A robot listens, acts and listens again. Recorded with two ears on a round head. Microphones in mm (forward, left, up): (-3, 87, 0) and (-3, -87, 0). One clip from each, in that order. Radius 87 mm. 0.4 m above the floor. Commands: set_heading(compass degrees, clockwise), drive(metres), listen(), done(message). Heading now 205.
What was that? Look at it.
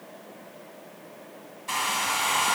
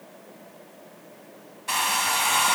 set_heading(230)
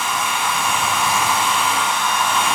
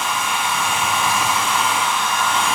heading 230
done("Facing the hair dryer.")